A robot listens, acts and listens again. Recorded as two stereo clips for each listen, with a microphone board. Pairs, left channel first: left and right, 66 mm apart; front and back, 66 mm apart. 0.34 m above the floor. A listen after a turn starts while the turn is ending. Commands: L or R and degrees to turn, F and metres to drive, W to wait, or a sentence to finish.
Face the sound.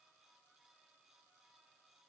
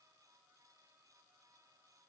W
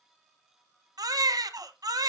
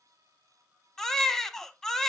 R80
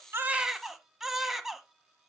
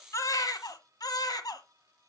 Facing the baby crying, 1 to 2 m away.